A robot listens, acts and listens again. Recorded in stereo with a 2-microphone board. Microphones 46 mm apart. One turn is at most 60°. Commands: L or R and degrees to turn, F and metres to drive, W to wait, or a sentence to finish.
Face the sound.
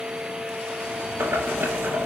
R60
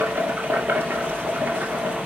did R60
R50
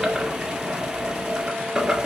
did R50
R10
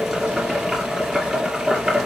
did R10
Facing the boiling.